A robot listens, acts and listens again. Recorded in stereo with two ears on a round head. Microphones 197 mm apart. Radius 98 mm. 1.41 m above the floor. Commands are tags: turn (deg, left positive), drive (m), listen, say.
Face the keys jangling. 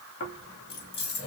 <turn deg="50"/>
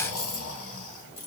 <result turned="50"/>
<turn deg="25"/>
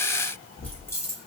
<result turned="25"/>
<turn deg="15"/>
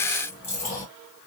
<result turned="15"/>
<turn deg="15"/>
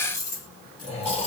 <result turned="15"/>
<turn deg="15"/>
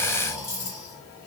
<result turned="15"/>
<turn deg="10"/>
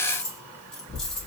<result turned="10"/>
<say>Facing the keys jangling, 1 to 2 m away.</say>